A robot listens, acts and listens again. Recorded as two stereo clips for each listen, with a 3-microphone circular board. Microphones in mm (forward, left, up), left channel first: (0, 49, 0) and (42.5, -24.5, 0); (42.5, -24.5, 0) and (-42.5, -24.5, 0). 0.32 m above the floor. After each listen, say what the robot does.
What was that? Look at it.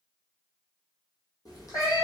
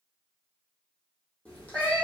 Turn 70° left.
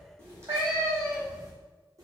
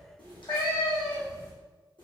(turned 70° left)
Turn 10° right.
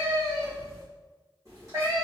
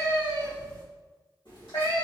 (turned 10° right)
Turn 15° right.
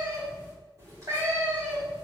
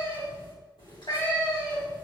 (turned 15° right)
Turn 10° right.
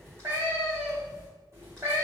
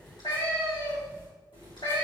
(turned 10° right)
Found it: a cat meowing, straight ahead.